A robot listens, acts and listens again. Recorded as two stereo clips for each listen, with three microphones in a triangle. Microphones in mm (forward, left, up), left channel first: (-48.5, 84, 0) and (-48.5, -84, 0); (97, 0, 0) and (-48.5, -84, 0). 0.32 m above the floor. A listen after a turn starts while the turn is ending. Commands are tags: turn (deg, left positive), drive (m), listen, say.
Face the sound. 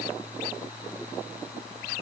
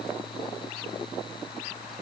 <listen/>
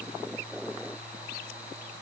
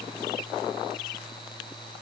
<listen/>
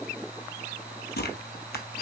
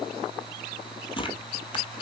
<turn deg="90"/>
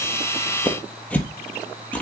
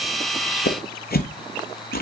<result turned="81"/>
<turn deg="10"/>
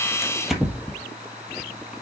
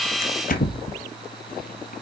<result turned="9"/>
<say>Found it: tearing paper, straight ahead.</say>